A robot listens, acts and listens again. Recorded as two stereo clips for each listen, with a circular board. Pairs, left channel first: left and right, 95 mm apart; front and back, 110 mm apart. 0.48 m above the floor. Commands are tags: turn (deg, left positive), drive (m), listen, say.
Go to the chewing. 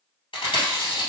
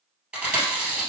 <turn deg="105"/>
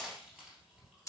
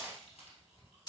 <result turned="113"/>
<turn deg="-10"/>
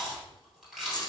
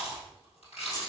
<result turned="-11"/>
<drive m="1.0"/>
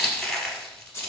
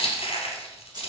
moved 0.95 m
<drive m="1.0"/>
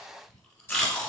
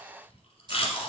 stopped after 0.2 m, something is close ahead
<turn deg="10"/>
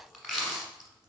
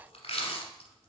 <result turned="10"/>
<say>I am next to the chewing.</say>